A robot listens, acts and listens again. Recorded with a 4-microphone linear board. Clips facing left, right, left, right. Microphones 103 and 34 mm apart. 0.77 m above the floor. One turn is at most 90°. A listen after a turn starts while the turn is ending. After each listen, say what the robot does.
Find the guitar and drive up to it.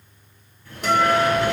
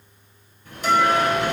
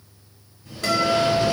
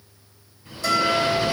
Turn 65° left.
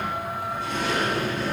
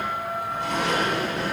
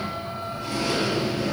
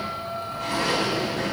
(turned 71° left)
Keep listening.
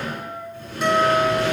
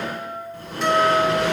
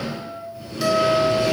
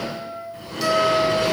Drive 1.0 m forward.
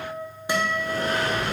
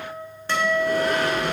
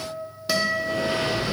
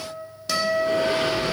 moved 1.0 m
Turn 15° left.
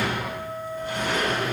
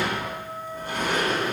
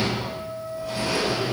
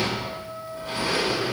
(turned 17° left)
Drive 1.0 m forward.
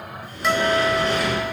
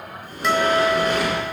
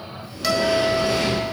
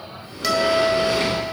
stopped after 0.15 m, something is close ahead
Arrived at the guitar, straight ahead.